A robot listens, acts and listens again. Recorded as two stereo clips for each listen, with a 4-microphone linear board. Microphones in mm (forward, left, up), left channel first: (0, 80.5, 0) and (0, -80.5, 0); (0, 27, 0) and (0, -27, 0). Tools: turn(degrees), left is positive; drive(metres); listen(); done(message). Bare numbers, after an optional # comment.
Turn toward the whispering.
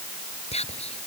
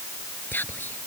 # The whispering: about 40° left or 140° left.
turn(40)
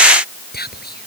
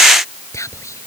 # So it is at 100° left.
turn(100)
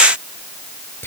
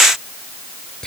# The whispering is now 15° left.
turn(15)
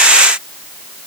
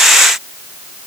listen()
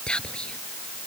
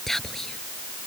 done("Facing the whispering.")